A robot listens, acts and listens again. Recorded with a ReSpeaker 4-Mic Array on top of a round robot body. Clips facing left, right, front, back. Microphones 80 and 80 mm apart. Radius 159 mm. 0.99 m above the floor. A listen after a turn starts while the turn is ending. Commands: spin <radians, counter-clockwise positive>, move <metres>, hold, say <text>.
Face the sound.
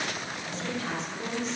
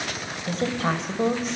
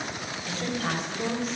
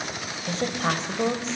spin -2.09
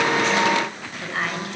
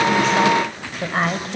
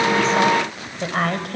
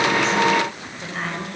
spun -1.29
spin -0.61
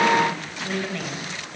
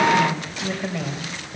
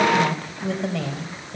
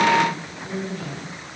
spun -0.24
spin -0.26
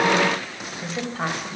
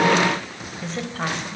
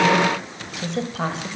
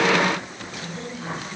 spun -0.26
spin 0.17
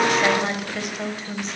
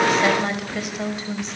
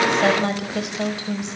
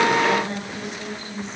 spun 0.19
say Facing the woman speaking.